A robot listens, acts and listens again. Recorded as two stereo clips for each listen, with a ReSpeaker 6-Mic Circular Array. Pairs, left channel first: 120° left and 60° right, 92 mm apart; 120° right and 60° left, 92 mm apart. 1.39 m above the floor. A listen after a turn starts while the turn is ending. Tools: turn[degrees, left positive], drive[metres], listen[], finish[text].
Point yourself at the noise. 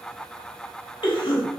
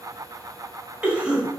Thought: The cough: 135° left.
Action: turn[135]
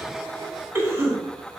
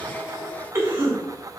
Action: finish[Found it: a cough, straight ahead.]